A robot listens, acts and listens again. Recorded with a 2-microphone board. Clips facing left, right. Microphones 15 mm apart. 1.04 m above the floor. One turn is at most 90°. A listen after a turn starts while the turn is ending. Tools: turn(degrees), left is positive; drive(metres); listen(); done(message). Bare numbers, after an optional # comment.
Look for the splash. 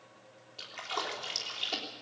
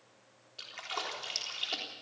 turn(30)
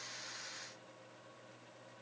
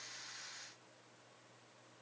listen()
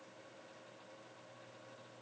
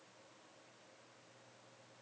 done("I heard a splash, but can't make it out now. It was about 30° right or 150° left.")